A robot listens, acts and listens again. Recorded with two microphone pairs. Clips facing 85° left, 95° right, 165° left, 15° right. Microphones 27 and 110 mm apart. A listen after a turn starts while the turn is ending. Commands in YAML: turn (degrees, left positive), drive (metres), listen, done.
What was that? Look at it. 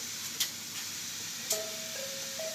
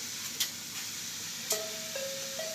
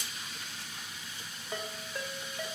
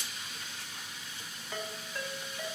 turn: -130
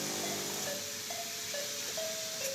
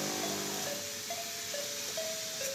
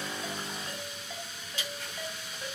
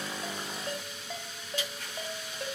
turn: -15
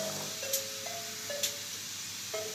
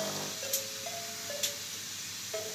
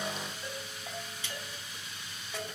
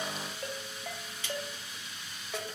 done: "Facing the ringtone."